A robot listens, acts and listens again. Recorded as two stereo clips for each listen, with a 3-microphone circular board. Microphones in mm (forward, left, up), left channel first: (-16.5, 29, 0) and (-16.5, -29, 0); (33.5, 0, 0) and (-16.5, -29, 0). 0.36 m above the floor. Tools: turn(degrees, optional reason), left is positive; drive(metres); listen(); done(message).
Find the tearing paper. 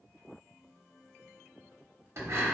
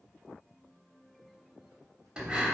listen()
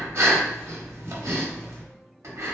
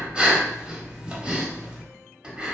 listen()
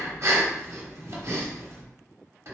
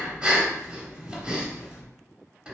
done("I can't make out tearing paper, only breathing.")